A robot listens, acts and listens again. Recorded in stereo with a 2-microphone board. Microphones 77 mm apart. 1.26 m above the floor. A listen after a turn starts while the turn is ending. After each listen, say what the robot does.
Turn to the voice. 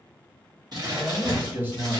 Turn 25° right.
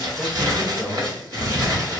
Facing the man speaking, 1 to 2 m away.